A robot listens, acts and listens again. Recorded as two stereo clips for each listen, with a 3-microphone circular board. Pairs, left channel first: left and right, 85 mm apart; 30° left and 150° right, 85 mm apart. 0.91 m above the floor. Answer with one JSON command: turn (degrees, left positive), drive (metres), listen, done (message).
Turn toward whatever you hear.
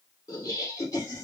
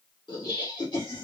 {"turn": 40}
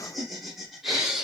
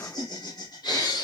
{"done": "Found it: laughter, straight ahead, 2 to 4 m away."}